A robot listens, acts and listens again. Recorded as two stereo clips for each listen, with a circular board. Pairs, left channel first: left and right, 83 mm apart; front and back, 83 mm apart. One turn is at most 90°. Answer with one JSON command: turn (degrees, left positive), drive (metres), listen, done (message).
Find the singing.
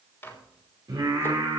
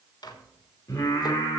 {"turn": -50}
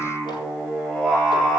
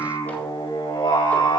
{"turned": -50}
{"done": "Facing the singing."}